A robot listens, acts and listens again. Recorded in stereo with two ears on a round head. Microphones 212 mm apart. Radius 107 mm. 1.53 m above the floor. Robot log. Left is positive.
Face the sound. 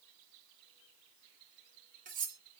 note: The cutlery clinking: about 40° right or 140° right.
cmd yaw -40
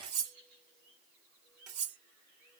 note: So it is at 95° right.
cmd yaw -95
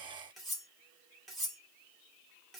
end: Facing the cutlery clinking.